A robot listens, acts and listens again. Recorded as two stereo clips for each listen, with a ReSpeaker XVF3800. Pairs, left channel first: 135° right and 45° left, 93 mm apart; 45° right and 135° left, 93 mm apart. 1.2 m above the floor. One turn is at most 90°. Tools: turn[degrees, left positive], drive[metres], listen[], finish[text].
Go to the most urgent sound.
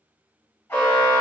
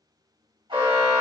Thought: The alarm: 155° left.
Action: turn[90]
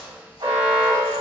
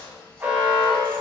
Thought: The alarm is now 65° left.
Action: turn[65]
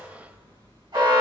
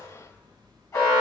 Action: drive[1.0]
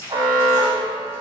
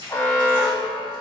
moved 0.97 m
Action: drive[1.0]
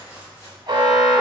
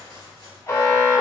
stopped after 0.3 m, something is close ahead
Action: finish[Arrived at the alarm, straight ahead.]